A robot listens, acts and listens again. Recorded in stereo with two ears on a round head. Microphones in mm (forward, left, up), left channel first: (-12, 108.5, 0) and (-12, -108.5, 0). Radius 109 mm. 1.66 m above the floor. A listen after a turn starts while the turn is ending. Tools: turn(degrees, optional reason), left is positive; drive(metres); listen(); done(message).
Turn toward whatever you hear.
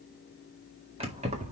turn(degrees=-30, reason="The keys jangling: about 30° right or 150° right.")
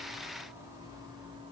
turn(degrees=-20, reason="The keys jangling: about 20° right or 160° right.")
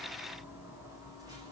turn(degrees=-30)
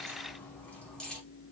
done("Found it: keys jangling, straight ahead.")